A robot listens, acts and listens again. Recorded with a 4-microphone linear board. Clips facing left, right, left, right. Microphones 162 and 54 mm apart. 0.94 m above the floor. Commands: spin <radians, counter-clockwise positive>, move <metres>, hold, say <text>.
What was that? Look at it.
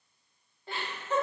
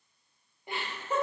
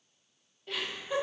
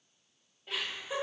spin -0.52
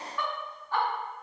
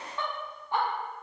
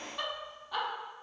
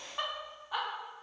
spin -0.26
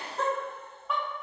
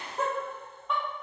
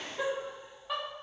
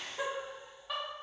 spin 0.52
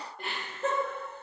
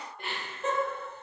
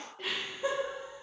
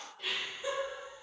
spin 2.36
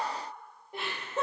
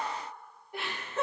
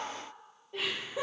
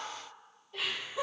spin 0.35
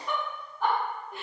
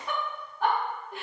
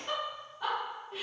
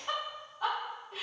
say Found it: laughter, straight ahead, 1 to 2 m away.